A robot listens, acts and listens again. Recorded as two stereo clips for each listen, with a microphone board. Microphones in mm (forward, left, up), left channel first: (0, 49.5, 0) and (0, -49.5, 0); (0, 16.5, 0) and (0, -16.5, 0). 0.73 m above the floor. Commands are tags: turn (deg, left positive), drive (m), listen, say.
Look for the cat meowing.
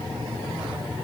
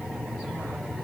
<listen/>
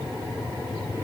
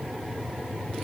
<listen/>
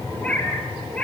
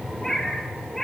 <turn deg="30"/>
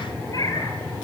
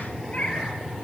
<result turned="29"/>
<turn deg="140"/>
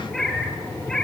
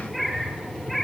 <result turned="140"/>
<say>Facing the cat meowing.</say>